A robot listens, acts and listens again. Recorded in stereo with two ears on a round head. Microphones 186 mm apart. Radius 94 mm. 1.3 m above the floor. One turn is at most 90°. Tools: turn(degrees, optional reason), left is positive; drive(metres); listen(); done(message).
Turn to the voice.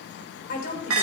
turn(degrees=50, reason="The woman speaking: about 50° left or 130° left.")
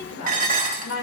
turn(degrees=85, reason="So it is at 85° left.")
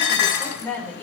turn(degrees=10, reason="The woman speaking is now 10° left.")
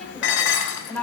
turn(degrees=10, reason="The woman speaking is now 10° left.")
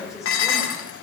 done("Found it: a woman speaking, straight ahead, over 4 m away.")